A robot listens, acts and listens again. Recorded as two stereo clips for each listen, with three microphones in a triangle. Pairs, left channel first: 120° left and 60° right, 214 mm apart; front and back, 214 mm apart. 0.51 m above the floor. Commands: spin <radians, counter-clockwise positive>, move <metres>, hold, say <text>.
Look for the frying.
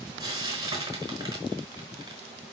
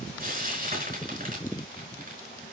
spin -2.27
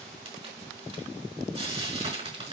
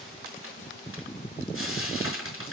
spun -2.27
say Found it: frying, straight ahead, over 4 m away.